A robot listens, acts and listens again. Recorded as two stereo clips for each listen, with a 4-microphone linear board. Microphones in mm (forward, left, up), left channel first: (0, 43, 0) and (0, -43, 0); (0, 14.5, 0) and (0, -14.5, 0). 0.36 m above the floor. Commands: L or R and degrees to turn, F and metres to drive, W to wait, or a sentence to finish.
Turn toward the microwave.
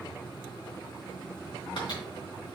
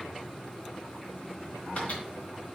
W
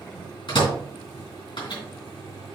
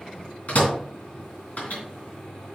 L60
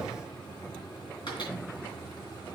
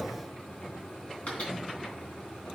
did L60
W
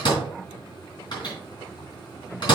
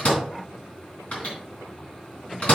L55
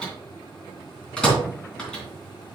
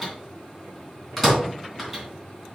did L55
L10
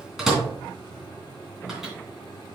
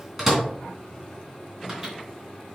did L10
Found it: a microwave, straight ahead, 2 to 4 m away.